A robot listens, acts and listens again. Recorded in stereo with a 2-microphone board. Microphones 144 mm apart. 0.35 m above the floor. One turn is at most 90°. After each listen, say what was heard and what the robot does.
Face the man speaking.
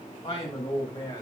The man speaking: about 35° left or 145° left. Turn 35° left.
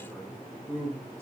So it is at 15° right. Turn 15° right.
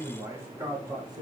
The man speaking is now 30° right. Turn 30° right.
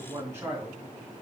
The man speaking is now 20° right. Turn 20° right.
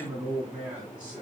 The man speaking is now 10° right. Turn 10° right.
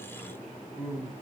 Facing the man speaking.